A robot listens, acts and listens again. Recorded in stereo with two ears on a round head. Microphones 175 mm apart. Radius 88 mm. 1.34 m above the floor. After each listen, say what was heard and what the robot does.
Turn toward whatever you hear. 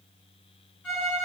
Turn 30° left.
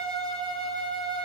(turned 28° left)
So it is at 25° right. Turn 25° right.
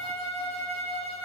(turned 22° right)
Found it: a violin, straight ahead, 1 to 2 m away.